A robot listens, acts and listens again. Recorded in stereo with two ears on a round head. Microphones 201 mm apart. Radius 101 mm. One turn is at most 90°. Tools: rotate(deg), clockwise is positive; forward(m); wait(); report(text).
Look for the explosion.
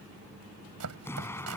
rotate(-30)
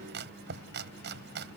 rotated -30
wait()
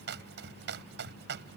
report("I heard an explosion, but can't make it out now. It was about 20° right or 140° left.")